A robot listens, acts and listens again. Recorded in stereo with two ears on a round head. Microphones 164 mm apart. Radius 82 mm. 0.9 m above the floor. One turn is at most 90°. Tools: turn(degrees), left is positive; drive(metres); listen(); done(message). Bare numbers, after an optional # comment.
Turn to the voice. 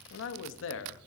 # The man speaking: about 70° left or 110° left.
turn(70)
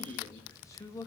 # So it is at 15° left.
turn(15)
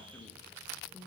listen()
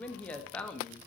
done("Found it: a man speaking, straight ahead.")